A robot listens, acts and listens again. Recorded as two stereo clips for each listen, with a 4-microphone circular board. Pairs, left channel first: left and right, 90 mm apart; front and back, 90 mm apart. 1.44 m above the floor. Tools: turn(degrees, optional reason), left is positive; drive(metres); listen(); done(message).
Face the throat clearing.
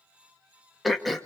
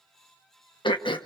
done("Found it: throat clearing, straight ahead, 1 to 2 m away.")